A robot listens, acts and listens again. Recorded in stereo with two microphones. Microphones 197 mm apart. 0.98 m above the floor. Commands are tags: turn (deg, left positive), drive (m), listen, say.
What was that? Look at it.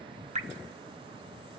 <turn deg="-35"/>
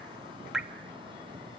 <say>Found it: dripping, straight ahead.</say>